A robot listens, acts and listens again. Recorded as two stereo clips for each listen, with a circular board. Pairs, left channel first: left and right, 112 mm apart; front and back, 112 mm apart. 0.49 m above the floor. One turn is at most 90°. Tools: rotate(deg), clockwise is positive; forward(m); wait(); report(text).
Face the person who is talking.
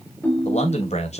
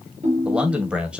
rotate(-90)
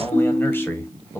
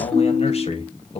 rotate(-20)
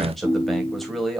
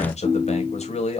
report("Found it: a man speaking, straight ahead, 2 to 4 m away.")